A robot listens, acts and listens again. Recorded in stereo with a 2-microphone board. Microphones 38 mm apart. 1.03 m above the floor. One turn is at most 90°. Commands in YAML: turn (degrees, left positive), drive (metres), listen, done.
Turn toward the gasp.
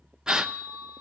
turn: -20
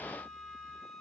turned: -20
listen: true
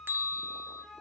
done: "I heard a gasp, but can't make it out now. It was about straight ahead or 140° right."